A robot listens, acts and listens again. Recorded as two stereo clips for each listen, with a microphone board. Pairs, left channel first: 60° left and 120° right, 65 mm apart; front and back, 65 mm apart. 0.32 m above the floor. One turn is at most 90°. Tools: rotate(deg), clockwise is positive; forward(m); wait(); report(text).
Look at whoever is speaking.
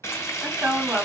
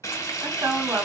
rotate(90)
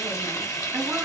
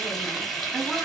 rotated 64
rotate(90)
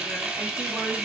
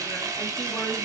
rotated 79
rotate(25)
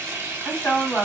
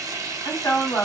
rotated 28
report("Facing the woman speaking.")